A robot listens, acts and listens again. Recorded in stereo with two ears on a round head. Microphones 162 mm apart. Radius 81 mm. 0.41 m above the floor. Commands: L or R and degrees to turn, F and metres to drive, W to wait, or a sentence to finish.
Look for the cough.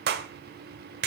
W
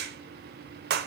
W
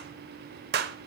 I can't make out a cough, only a clap.